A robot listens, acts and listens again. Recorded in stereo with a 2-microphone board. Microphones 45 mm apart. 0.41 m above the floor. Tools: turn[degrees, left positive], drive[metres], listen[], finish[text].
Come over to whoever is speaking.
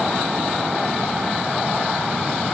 Action: listen[]
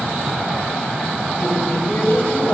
Thought: The woman speaking: about 50° left or 130° left.
Action: turn[50]
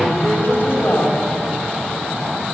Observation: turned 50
Thought: So it is at 75° left.
Action: turn[75]
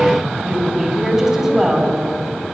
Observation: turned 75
Thought: The woman speaking is now 15° right.
Action: turn[-15]
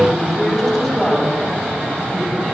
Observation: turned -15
Action: drive[1.0]
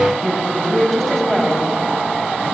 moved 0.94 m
Thought: The woman speaking is now 10° left.
Action: turn[10]
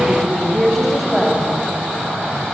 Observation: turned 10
Action: drive[1.0]
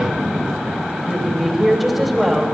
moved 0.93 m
Action: drive[1.0]
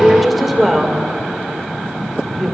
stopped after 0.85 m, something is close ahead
Action: finish[I am next to the woman speaking.]